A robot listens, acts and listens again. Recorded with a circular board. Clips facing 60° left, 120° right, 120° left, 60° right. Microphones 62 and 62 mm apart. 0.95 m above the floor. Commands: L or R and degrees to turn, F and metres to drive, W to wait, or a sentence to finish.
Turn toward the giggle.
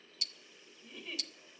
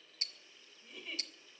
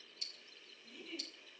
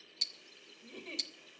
R30
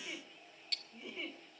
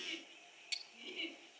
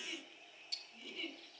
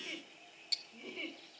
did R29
Facing the giggle.